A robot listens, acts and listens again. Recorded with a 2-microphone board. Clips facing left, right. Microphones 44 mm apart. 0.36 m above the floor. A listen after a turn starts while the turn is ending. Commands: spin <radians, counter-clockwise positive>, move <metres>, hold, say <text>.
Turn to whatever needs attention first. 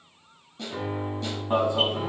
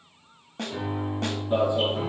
spin 1.05
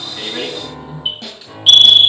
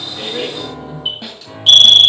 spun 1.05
spin 0.17
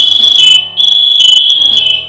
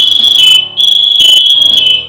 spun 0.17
say Facing the alarm.